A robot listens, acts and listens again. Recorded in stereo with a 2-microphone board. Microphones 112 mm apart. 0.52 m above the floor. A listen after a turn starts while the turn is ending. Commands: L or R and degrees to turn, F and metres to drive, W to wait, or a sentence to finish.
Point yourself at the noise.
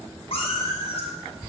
L70
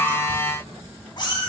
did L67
L50
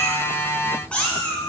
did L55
L15
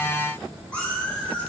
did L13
L10
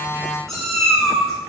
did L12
Facing the cat meowing, 2 to 4 m away.